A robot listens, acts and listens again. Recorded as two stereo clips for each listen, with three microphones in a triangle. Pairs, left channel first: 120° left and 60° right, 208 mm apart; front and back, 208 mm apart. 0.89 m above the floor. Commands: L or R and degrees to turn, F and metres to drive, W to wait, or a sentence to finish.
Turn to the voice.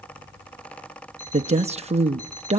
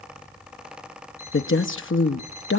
Found it: a woman speaking, straight ahead, under 1 m away.